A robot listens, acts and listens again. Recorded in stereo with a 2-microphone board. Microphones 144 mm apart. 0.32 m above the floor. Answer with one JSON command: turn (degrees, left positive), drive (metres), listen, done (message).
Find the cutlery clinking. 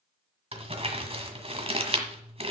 {"listen": true}
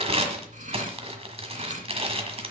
{"turn": -60}
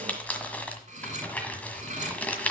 {"turn": -55}
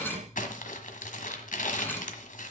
{"turn": 15}
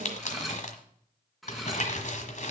{"done": "Facing the cutlery clinking, 1 to 2 m away."}